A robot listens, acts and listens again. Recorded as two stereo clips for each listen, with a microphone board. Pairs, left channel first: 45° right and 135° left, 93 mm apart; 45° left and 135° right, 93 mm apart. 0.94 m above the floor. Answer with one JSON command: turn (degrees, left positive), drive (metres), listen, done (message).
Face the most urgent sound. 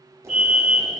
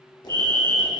{"turn": -135}
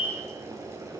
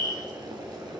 {"turn": -25}
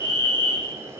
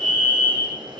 {"turn": -25}
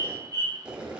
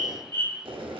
{"done": "Facing the fire alarm."}